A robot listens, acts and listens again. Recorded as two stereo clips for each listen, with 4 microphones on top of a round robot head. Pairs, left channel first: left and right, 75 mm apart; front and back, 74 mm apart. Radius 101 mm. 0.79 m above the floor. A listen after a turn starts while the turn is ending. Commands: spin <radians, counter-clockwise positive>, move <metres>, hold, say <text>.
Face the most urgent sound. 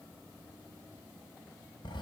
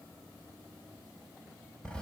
hold
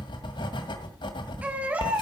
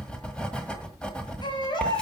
spin -0.35
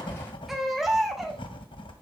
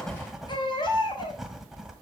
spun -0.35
say Facing the baby crying, 2 to 4 m away.